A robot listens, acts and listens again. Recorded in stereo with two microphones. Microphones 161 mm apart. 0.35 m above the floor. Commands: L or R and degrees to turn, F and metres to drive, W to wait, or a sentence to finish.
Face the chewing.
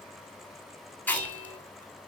L30
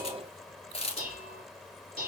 L140
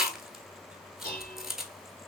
Found it: chewing, straight ahead, under 1 m away.